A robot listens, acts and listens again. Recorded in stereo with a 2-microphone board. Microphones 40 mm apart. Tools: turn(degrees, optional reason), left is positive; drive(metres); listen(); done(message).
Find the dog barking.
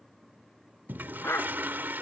turn(degrees=90)
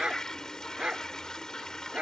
turn(degrees=-25, reason="So it is at 25° right.")
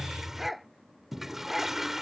done("Found it: a dog barking, straight ahead.")